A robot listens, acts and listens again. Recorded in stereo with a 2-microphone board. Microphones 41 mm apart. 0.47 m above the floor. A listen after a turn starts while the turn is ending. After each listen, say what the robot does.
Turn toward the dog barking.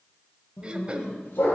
Turn 60° left.
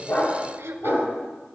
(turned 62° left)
Turn 60° left.
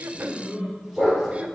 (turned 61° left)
Found it: a dog barking, straight ahead, over 4 m away.